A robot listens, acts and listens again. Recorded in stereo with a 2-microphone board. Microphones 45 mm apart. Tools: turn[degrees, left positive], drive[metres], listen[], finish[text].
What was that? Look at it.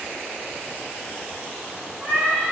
Thought: The cat meowing: about 45° right or 135° right.
Action: turn[-45]
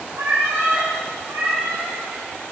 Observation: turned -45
Thought: So it is at 80° right.
Action: turn[-80]
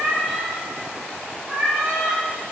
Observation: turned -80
Thought: The cat meowing is now 25° right.
Action: turn[-25]
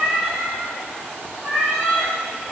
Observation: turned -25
Thought: The cat meowing is now 10° right.
Action: turn[-10]
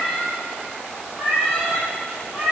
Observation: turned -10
Action: finish[Facing the cat meowing.]